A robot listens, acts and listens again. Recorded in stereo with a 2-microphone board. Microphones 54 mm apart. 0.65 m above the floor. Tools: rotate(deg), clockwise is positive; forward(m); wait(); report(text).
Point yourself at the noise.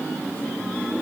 wait()
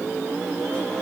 wait()
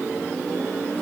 report("I can't make out anything.")